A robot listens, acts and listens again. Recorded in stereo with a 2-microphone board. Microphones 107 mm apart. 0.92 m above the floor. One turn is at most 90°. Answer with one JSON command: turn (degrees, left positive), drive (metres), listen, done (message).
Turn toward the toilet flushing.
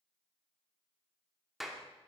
{"listen": true}
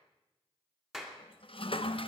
{"turn": 60}
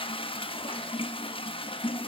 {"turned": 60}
{"turn": 60}
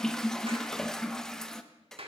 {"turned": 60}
{"done": "Found it: a toilet flushing, straight ahead."}